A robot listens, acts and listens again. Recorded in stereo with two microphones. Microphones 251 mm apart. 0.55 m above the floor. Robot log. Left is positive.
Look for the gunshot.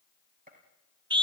note: The gunshot: about 35° right or 145° right.
cmd yaw -35
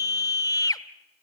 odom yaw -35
cmd idle
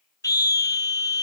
end: I heard a gunshot, but can't make it out now. It was about straight ahead or 110° right.